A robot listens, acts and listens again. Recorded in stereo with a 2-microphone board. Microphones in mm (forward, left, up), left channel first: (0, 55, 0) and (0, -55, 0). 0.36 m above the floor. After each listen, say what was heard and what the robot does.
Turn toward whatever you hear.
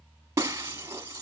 The breaking glass: about 25° right or 155° right. Turn 25° right.
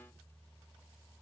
Keep listening.
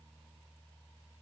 I heard breaking glass, but can't make it out now. It was about straight ahead or 130° right.